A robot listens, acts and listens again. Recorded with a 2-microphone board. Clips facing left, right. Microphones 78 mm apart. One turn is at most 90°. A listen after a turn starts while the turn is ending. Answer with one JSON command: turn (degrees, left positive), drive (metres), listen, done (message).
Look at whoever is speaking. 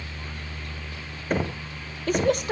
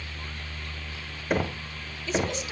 {"turn": 55}
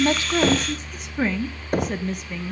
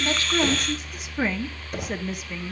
{"done": "Facing the woman speaking, 1 to 2 m away."}